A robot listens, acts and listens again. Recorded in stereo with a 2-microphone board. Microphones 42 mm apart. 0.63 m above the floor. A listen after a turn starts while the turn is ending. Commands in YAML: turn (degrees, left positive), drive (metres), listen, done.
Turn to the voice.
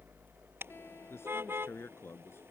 turn: 90
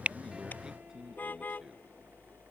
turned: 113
turn: -25
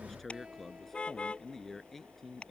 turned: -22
turn: 10
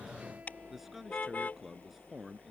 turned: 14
done: "Found it: a man speaking, straight ahead."